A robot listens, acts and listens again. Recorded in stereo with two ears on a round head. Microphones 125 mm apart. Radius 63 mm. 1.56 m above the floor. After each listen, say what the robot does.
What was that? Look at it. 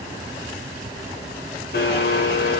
Turn 75° left.
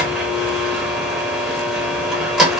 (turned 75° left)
Facing the blender, under 1 m away.